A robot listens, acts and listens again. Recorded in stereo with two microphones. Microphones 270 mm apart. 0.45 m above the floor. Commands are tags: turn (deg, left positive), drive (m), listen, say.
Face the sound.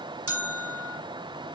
<turn deg="-55"/>
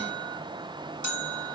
<turn deg="-70"/>
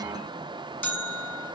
<say>Found it: a bell, straight ahead, 1 to 2 m away.</say>